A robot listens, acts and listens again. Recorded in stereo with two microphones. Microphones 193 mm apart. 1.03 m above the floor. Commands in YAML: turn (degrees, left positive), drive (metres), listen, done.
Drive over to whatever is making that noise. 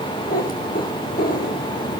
turn: 50
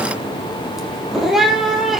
drive: 1.0
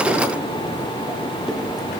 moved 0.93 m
listen: true
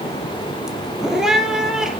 drive: 1.0
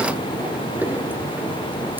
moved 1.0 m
turn: -10
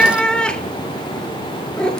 drive: 1.0
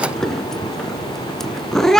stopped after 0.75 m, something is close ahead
done: "Arrived at the cat meowing, straight ahead."